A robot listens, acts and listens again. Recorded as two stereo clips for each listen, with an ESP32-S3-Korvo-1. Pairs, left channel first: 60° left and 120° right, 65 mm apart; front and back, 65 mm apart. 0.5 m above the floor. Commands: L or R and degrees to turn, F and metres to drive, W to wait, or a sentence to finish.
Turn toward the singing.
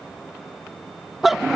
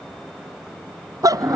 W
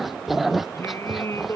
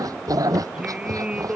L110
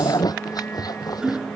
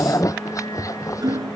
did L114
Facing the singing.